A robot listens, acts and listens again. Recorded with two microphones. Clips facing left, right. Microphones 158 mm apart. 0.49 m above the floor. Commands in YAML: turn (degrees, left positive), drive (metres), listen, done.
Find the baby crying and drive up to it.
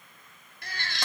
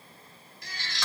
turn: 60
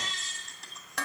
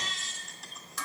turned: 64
drive: 1.0
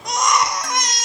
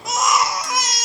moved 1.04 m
drive: 1.0
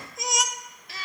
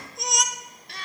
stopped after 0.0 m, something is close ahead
done: "Arrived at the baby crying, straight ahead."